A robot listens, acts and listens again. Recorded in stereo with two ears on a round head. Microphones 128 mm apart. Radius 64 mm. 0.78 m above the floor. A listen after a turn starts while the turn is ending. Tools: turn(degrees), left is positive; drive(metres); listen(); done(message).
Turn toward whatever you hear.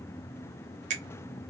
turn(degrees=-50)
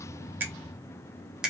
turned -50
done("Facing the finger snap.")